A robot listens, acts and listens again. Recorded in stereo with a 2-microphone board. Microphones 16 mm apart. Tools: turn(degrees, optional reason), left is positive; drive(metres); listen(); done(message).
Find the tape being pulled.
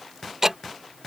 listen()
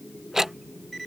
listen()
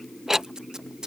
turn(degrees=-60, reason="The tape being pulled: about 60° right or 120° right.")
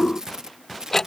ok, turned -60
turn(degrees=-45, reason="So it is at 45° right.")
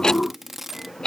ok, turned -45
turn(degrees=-10, reason="The tape being pulled is now 10° right.")
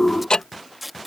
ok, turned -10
done("Found it: tape being pulled, straight ahead.")